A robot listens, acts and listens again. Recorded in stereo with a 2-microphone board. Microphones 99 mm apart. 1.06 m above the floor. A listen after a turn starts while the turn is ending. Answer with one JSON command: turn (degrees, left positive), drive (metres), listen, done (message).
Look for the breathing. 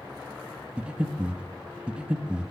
{"turn": -30}
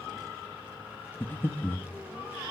{"turn": 20}
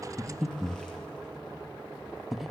{"done": "Facing the breathing."}